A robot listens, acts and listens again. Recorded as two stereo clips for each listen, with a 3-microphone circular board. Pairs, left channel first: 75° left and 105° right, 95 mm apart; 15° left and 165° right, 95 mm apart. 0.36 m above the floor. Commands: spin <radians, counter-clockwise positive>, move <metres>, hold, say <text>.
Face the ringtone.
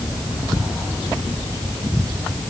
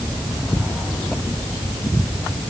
hold
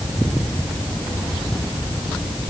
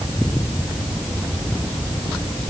hold
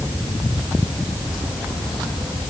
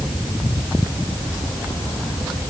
say I can't make out a ringtone to turn to.